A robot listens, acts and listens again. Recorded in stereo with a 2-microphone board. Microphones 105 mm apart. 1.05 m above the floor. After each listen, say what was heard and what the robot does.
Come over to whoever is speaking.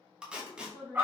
The woman speaking: about 25° left or 155° left. Turn 25° left.
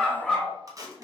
Keep listening.
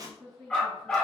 Drive 1.0 m forward.
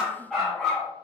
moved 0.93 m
Keep listening.
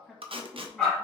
Drive 1.0 m forward.
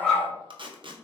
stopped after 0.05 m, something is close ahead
Keep listening.
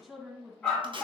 I am next to the woman speaking.